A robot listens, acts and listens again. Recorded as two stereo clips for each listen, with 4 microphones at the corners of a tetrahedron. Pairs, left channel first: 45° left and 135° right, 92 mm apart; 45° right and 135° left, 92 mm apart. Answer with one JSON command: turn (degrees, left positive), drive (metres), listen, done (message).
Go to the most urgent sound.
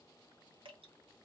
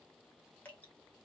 {"listen": true}
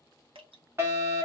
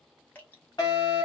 {"turn": -75}
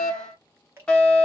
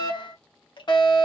{"turn": -35}
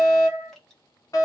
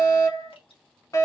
{"drive": 1.0}
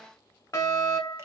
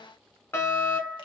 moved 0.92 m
{"drive": 1.0}
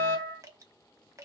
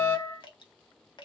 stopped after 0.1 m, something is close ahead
{"done": "I am next to the fire alarm."}